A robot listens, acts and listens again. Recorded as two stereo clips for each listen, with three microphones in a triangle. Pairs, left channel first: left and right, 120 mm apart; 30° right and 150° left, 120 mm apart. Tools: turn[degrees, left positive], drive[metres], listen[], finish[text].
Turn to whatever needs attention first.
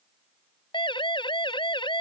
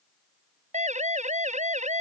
Thought: The siren: 140° left.
Action: turn[140]
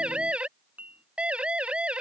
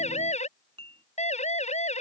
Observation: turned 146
Thought: The siren is now 10° right.
Action: turn[-10]
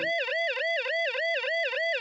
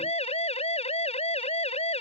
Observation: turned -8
Action: finish[Facing the siren.]